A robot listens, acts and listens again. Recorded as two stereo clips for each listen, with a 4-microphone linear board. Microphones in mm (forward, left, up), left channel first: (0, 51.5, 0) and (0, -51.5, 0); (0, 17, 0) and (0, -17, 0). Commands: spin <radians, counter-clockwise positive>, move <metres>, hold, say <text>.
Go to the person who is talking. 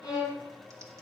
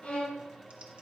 hold
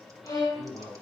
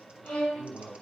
spin 1.57
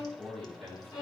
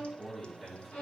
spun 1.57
spin 0.17
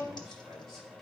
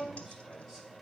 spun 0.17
hold
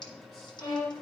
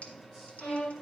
hold
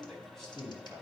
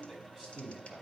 move 1.0
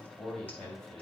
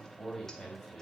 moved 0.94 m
move 1.0
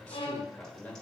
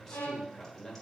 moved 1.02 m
spin 0.26
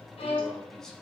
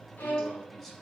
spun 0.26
move 1.0
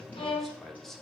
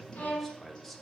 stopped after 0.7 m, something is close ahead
say I am next to the man speaking.